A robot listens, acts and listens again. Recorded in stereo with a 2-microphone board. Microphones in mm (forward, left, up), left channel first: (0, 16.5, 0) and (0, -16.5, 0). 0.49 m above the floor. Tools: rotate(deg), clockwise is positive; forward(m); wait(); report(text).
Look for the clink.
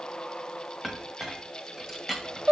rotate(30)
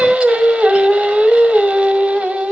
wait()
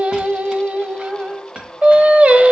rotate(145)
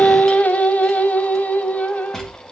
rotate(-20)
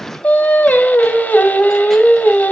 wait()
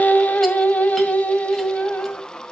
wait()
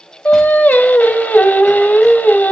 report("I heard a clink from this way, but can't make it out now.")